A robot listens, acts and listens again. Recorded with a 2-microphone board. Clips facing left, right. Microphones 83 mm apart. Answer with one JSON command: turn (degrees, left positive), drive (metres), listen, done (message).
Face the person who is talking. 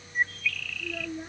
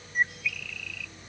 {"turn": 90}
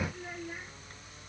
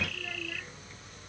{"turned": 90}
{"listen": true}
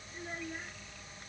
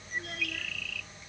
{"listen": true}
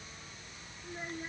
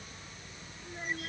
{"done": "Found it: a child speaking, straight ahead."}